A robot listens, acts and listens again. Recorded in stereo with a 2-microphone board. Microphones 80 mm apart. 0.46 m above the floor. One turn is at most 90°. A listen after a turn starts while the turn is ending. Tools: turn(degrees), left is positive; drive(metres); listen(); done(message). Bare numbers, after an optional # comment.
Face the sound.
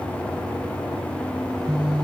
# The phone buzzing: about 70° right or 110° right.
turn(-70)
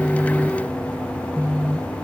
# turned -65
# So it is at 35° right.
turn(-35)
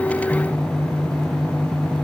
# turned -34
done("Facing the phone buzzing, 1 to 2 m away.")